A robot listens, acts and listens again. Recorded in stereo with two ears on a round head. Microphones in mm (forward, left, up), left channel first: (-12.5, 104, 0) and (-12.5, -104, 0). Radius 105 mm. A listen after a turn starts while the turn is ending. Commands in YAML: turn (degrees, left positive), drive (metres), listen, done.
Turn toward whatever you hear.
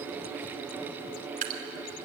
turn: -35
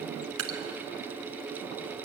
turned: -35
turn: -105
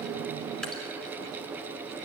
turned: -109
listen: true
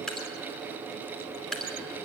done: "Facing the dripping, 2 to 4 m away."